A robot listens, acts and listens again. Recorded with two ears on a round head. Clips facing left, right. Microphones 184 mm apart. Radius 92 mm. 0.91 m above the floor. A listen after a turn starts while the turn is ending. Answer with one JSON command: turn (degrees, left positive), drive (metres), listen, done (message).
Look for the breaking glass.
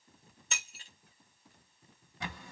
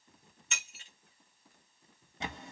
{"turn": 35}
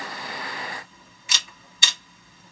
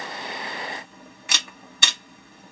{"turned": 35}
{"listen": true}
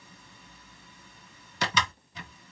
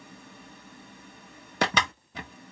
{"done": "I heard breaking glass, but can't make it out now. It was about straight ahead or 110° left."}